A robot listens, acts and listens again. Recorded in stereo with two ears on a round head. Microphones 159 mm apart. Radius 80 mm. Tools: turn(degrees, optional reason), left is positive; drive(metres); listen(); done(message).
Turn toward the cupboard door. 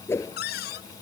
turn(degrees=60, reason="The cupboard door: about 60° left or 120° left.")
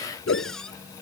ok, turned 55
done("Facing the cupboard door.")